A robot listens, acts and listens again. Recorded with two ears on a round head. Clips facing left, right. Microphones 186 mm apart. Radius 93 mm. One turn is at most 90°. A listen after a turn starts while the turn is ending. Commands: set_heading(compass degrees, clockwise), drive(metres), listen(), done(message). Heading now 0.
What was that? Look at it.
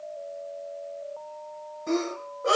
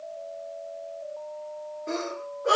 set_heading(295)
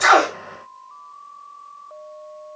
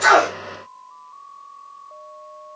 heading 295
listen()
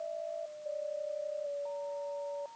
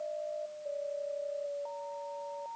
done("I heard a sneeze, but can't make it out now. It was about straight ahead or 50° left.")